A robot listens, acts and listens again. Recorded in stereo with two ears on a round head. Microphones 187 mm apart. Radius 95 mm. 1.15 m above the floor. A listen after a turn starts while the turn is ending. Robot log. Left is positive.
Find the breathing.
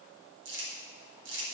cmd idle
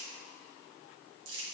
cmd idle
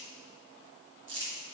end: I can't make out breathing, only crumpling.